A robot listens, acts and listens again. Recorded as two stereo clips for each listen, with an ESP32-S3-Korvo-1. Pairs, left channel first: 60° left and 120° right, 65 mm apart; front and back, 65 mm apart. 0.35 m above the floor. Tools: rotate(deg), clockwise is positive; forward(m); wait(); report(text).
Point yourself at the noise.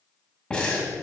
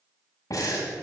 rotate(15)
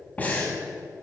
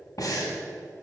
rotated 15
report("Facing the breathing.")